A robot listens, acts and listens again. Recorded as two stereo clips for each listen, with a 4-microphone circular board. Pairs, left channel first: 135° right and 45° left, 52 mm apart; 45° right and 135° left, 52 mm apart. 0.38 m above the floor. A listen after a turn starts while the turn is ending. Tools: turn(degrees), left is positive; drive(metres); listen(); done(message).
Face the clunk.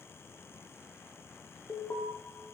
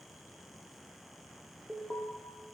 listen()
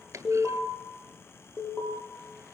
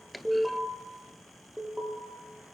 turn(degrees=45)
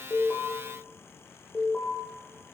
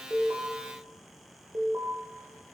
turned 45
done("Facing where the clunk came from. I can't hear it now.")